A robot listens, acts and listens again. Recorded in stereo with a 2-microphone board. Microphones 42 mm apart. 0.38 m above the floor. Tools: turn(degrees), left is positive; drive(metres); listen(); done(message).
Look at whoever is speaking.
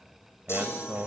turn(degrees=-50)
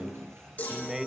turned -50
turn(degrees=-15)
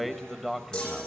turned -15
done("Found it: a man speaking, straight ahead, 1 to 2 m away.")